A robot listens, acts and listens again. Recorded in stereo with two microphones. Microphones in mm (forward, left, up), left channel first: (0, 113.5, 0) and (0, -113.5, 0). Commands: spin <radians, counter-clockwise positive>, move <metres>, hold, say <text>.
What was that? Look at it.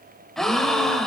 spin 0.52
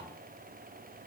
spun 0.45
hold
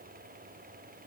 say I heard a gasp, but can't make it out now. It was about 25° right or 150° left.